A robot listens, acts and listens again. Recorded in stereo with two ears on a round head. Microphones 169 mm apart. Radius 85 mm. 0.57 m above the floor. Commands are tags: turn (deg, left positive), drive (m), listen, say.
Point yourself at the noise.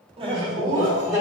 <turn deg="-15"/>
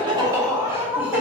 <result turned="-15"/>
<turn deg="-30"/>
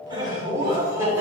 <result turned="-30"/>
<turn deg="-30"/>
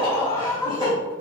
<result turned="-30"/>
<turn deg="-155"/>
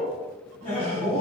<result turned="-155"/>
<turn deg="35"/>
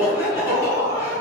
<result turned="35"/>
<turn deg="20"/>
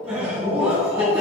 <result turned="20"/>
<say>Found it: laughter, straight ahead, 2 to 4 m away.</say>